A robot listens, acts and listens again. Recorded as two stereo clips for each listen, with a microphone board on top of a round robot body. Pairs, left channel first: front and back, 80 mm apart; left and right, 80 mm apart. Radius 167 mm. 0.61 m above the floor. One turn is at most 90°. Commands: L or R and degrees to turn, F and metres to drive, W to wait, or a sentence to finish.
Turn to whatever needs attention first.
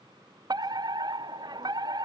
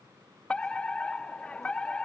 L90
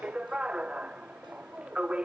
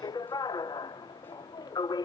L90
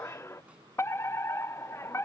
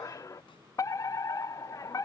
L50
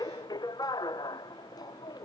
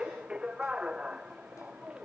R15
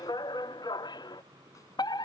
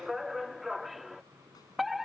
Found it: a fire alarm, straight ahead.